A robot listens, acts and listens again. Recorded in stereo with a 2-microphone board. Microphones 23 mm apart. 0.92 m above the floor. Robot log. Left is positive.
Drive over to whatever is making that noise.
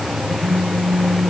note: The phone buzzing: about 50° left or 130° left.
cmd yaw +50
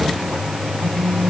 note: So it is at 80° left.
cmd yaw +80
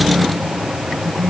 note: The phone buzzing is now 30° left.
cmd yaw +30
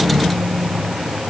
cmd idle
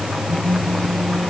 cmd fwd 1.0
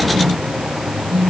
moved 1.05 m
note: The phone buzzing is now 10° left.
cmd yaw +10
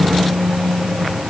cmd fwd 1.0
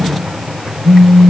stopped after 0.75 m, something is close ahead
note: The phone buzzing is now 10° right.
cmd yaw -10
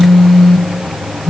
end: I am next to the phone buzzing.